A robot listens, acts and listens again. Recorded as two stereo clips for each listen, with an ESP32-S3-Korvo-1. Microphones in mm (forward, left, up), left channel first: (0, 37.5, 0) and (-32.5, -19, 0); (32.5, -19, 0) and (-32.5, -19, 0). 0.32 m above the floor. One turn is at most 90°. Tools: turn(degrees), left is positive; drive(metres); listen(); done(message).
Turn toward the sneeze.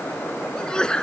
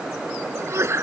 turn(degrees=90)
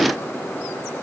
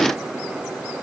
turn(degrees=45)
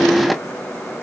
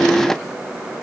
done("Facing where the sneeze came from. I can't hear it now.")